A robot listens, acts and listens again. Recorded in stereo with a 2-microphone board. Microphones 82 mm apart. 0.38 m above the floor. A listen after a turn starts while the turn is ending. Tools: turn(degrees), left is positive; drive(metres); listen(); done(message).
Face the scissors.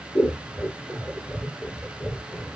turn(degrees=60)
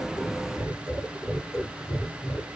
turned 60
turn(degrees=60)
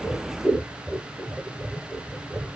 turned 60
done("Facing the scissors.")